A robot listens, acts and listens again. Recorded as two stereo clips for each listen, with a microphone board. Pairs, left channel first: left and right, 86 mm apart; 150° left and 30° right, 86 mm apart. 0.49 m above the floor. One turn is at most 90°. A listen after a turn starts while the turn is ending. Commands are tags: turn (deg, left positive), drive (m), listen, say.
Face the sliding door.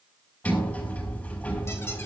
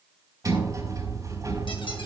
<turn deg="15"/>
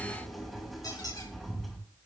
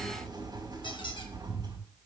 <say>Found it: a sliding door, straight ahead, over 4 m away.</say>